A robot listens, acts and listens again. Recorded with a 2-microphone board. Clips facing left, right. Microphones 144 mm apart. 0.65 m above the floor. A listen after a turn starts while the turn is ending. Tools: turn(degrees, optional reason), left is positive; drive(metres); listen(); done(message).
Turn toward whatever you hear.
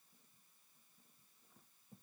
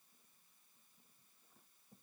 listen()
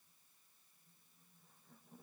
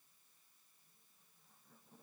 listen()
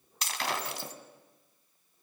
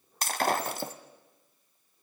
turn(degrees=-50, reason="The breaking glass: about 50° right or 130° right.")
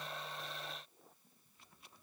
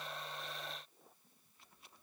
listen()
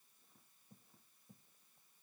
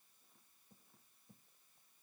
done("I heard breaking glass, but can't make it out now. It was about straight ahead or 80° right.")